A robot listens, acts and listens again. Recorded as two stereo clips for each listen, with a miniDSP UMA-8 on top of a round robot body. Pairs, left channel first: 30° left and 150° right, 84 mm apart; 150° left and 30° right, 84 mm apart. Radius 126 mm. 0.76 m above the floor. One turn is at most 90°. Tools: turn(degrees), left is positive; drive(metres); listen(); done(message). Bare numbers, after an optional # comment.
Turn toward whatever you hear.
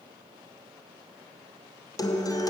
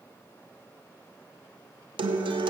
# The guitar: 10° right.
turn(-10)
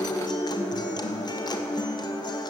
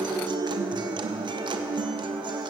done("Facing the guitar.")